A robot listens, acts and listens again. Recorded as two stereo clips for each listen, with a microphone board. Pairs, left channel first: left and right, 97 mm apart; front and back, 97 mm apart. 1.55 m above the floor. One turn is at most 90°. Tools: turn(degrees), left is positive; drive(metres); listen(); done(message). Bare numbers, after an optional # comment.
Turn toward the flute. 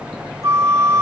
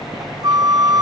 # The flute: 145° right.
turn(-90)
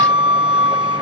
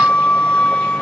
# The flute is now 75° right.
turn(-75)
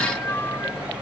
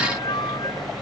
listen()
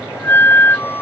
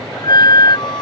# The flute is now 25° left.
turn(25)
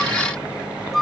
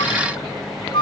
done("Facing the flute.")